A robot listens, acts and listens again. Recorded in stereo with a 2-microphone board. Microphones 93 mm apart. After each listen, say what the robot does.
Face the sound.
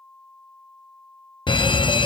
Turn 60° left.
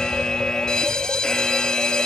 Turn 10° left.
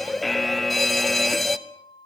Found it: a fire alarm, straight ahead, under 1 m away.